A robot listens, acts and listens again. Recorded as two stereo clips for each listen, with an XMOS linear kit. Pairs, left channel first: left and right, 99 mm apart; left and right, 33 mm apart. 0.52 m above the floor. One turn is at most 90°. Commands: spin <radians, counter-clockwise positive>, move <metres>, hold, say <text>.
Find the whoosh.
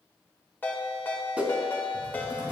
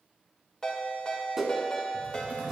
spin -0.52
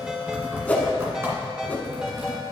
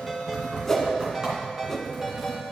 spin 0.26
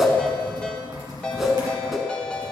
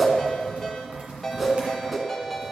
say Found it: a whoosh, straight ahead.